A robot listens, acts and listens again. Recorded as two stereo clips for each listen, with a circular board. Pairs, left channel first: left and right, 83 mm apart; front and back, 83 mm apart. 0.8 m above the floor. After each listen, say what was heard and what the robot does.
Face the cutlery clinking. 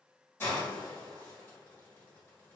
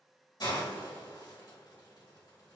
Keep listening.
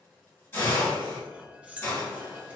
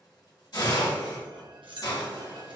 The cutlery clinking: 165° right. Turn 165° right.
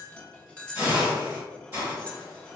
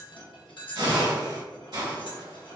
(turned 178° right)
The cutlery clinking is now 15° left. Turn 15° left.
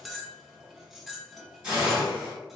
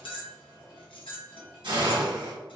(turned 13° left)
Facing the cutlery clinking, under 1 m away.